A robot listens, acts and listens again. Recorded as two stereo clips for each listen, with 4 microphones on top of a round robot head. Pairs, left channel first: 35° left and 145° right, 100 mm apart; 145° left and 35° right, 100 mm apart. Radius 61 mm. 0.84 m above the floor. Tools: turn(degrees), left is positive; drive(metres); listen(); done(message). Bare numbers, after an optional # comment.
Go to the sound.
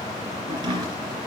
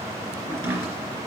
# The chopping: 100° right.
turn(-100)
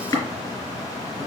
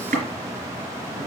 # The chopping is now 20° right.
turn(-20)
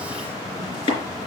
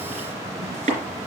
drive(1.0)
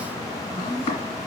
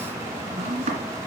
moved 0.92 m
drive(1.0)
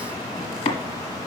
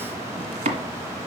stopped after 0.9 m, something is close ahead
done("I am next to the chopping.")